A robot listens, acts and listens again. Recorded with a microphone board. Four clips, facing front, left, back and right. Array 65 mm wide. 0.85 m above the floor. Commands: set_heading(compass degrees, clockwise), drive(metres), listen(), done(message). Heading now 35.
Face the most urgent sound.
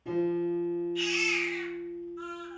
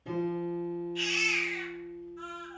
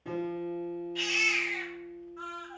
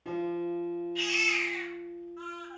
set_heading(190)
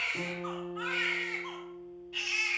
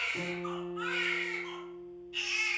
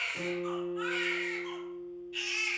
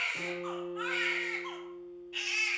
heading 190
set_heading(235)
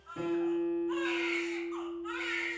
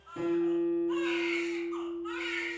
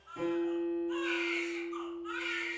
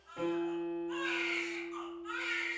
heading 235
set_heading(215)
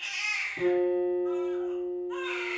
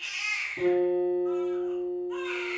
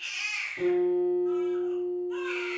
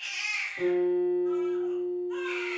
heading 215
done("Facing the baby crying.")